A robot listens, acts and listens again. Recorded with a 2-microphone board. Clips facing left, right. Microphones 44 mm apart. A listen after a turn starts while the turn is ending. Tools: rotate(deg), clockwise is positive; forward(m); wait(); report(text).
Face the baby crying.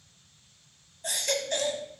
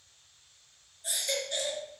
rotate(-75)
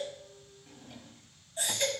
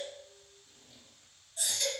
rotate(-30)
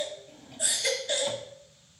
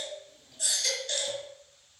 rotate(-20)
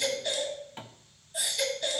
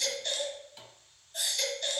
report("Facing the baby crying.")